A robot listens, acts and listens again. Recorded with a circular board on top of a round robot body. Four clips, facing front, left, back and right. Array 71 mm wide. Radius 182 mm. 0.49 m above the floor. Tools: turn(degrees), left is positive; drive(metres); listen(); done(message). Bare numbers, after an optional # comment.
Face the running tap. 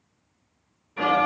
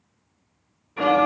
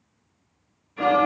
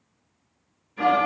listen()
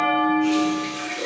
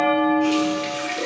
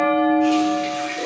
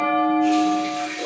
# The running tap: 115° left.
turn(115)
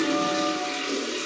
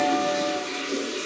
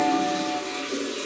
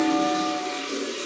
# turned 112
done("Found it: a running tap, straight ahead.")